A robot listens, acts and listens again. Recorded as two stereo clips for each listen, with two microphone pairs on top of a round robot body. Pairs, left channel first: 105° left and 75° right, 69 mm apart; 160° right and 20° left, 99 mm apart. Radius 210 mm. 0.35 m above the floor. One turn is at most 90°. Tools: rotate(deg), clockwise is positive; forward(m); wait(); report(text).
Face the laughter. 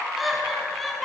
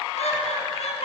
rotate(90)
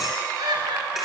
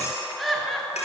rotate(70)
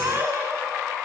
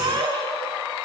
rotate(25)
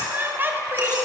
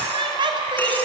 rotate(20)
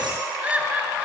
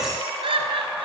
report("Found it: laughter, straight ahead, over 4 m away.")